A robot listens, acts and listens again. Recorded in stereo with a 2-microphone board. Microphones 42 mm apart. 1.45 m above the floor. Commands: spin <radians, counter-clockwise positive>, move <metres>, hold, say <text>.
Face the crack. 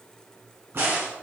spin -1.05
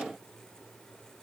hold
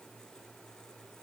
say I heard a crack, but can't make it out now. It was about straight ahead or 60° right.